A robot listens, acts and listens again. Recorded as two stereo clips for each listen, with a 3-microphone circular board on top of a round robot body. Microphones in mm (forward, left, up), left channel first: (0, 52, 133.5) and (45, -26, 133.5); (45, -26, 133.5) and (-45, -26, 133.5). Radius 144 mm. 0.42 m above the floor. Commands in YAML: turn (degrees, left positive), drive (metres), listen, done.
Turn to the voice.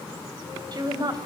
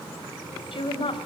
turn: -20
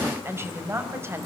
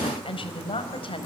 done: "Facing the woman speaking."